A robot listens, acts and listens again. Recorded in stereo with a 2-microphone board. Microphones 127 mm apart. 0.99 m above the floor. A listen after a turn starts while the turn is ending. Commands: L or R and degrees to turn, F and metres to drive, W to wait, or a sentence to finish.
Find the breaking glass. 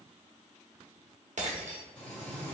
R70
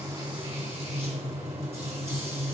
W
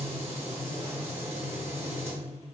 I heard breaking glass, but can't make it out now. It was about straight ahead or 40° right.